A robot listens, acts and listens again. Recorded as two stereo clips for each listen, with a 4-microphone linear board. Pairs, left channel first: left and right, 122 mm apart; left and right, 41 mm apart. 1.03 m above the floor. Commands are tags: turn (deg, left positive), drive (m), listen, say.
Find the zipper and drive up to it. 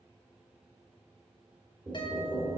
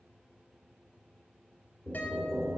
<listen/>
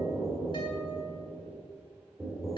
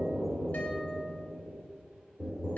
<listen/>
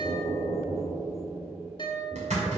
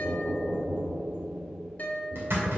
<turn deg="-65"/>
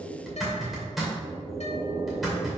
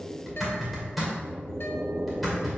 <drive m="1.0"/>
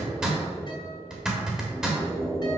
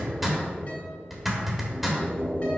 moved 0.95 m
<drive m="1.0"/>
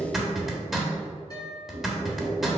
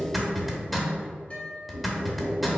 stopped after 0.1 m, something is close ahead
<say>Arrived at the zipper, straight ahead.</say>